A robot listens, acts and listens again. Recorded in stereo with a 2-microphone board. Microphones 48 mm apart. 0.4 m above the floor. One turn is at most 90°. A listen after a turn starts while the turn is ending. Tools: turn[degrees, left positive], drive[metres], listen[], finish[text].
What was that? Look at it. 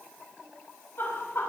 Thought: The laughter: about 60° left or 120° left.
Action: turn[60]
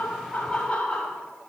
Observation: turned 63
Thought: So it is at 20° left.
Action: turn[20]
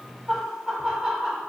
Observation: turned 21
Thought: The laughter is now 15° right.
Action: turn[-15]
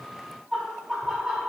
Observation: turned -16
Thought: The laughter is now 15° right.
Action: turn[-15]
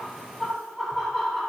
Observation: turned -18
Action: finish[Facing the laughter, 2 to 4 m away.]